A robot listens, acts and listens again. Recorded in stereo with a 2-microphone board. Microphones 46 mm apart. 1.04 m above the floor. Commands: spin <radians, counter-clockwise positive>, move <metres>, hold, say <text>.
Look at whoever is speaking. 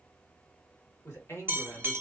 spin 0.96
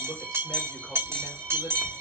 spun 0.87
hold
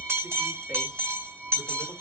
hold
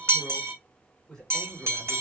spin 0.26
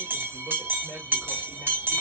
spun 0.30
hold
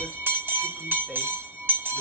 hold
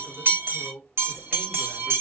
say Found it: a man speaking, straight ahead, 1 to 2 m away.